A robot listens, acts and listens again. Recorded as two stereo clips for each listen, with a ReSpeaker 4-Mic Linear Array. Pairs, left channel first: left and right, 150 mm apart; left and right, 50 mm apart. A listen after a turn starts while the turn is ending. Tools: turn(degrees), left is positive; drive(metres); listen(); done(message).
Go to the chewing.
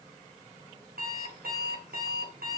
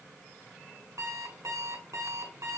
listen()
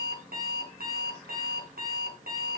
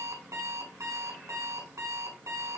listen()
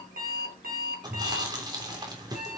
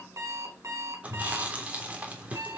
turn(degrees=-30)
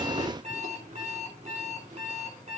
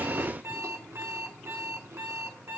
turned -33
listen()
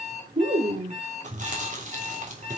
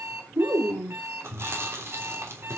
turn(degrees=-120)
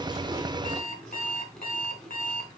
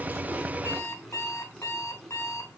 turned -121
listen()
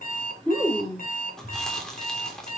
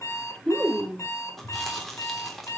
drive(metres=1.0)
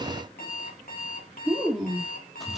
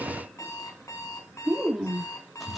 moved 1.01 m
drive(metres=1.0)
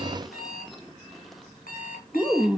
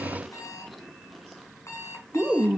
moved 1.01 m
drive(metres=1.0)
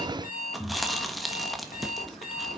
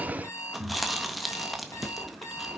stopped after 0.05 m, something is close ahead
done("I am next to the chewing.")